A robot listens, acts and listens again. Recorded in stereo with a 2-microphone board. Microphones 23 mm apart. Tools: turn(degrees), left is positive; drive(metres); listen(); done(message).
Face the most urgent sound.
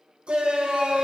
turn(degrees=-55)
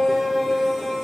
turn(degrees=-10)
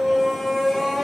done("Found it: a shout, straight ahead.")